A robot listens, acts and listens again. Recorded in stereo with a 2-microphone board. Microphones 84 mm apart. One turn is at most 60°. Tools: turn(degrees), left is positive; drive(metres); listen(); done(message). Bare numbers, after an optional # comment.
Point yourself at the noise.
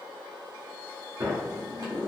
# The sliding door: about 40° right or 140° right.
turn(-40)
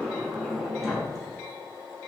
done("Facing the sliding door, 1 to 2 m away.")